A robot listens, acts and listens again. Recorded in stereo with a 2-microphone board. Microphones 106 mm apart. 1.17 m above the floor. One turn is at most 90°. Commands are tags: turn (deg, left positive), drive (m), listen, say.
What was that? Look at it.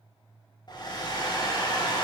<turn deg="40"/>
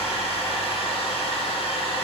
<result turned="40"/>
<turn deg="90"/>
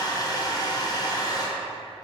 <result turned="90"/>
<turn deg="40"/>
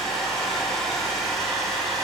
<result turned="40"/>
<say>Facing the hair dryer.</say>